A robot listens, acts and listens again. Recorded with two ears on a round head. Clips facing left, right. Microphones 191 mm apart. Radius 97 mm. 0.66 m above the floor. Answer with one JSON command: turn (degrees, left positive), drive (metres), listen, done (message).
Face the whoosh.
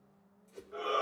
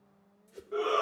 {"turn": -30}
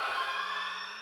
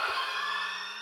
{"listen": true}
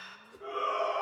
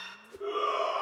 {"turn": -140}
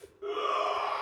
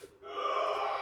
{"done": "Facing the whoosh, under 1 m away."}